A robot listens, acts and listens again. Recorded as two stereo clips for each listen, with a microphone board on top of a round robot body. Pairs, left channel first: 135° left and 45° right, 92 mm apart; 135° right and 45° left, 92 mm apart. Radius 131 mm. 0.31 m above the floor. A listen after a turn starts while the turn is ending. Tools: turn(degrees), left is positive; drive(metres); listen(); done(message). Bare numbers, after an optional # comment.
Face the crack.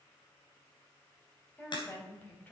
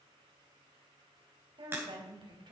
# The crack: 110° left.
turn(110)
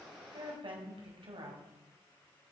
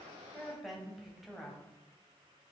done("Facing where the crack came from. I can't hear it now.")